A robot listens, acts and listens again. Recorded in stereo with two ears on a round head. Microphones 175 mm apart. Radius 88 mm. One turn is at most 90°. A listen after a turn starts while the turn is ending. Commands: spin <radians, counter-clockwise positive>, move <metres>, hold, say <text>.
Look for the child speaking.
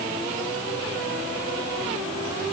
hold
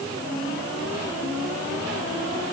hold
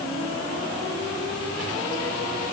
say I can't make out a child speaking to turn to.